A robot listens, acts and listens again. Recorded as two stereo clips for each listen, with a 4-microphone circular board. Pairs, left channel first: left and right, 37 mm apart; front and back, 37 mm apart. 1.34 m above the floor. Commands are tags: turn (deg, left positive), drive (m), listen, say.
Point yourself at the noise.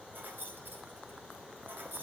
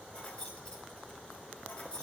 <turn deg="-60"/>
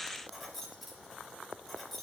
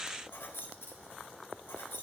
<say>Found it: keys jangling, straight ahead, 2 to 4 m away.</say>